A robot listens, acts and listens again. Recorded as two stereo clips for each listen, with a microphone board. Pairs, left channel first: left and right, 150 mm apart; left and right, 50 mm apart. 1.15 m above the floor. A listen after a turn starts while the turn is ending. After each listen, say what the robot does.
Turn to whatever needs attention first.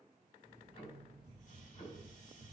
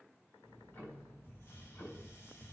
Keep listening.
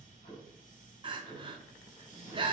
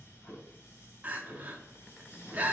Turn 35° right.
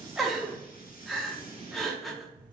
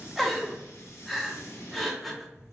Facing the crying, under 1 m away.